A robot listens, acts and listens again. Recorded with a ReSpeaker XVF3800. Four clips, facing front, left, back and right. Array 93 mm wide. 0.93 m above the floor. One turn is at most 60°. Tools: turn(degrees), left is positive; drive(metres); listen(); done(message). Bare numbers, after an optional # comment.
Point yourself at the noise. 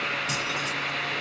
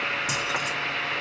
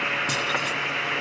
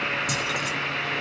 # The keys jangling: 155° left.
turn(60)
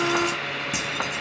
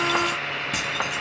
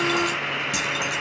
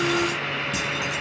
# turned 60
# The keys jangling is now 55° left.
turn(55)
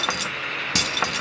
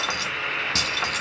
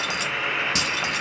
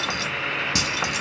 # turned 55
# The keys jangling is now 15° right.
turn(-15)
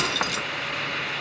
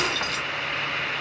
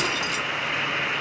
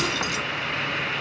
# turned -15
# The keys jangling is now 10° right.
turn(-10)
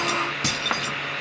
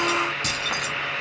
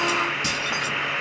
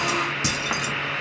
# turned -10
# The keys jangling is now 20° right.
turn(-20)
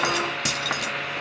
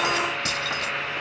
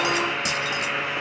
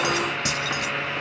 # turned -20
done("Facing the keys jangling, 1 to 2 m away.")